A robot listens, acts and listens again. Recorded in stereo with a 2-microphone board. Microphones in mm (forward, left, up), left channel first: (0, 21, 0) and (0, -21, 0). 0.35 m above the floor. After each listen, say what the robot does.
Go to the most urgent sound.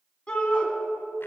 Turn 20° left.
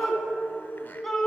Drive 1.0 m forward.
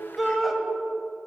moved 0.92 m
Drive 1.0 m forward.
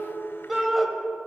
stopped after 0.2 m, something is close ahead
Turn 10° right.
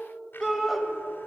I am next to the shout.